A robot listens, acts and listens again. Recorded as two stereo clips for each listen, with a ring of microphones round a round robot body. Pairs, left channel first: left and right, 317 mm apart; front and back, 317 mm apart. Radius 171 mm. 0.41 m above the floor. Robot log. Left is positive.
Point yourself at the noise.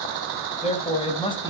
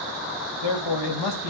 note: The man speaking: 15° left.
cmd yaw +15
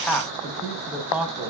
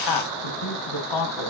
end: Facing the man speaking.